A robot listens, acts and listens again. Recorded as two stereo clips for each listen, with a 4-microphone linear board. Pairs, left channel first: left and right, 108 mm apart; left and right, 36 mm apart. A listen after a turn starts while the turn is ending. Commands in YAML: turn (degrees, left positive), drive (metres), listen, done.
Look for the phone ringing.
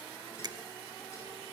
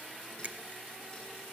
listen: true
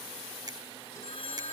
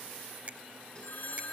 turn: 65
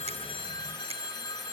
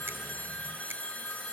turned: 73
turn: 45
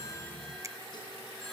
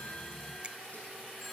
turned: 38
listen: true
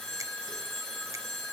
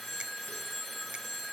done: "Facing the phone ringing, 2 to 4 m away."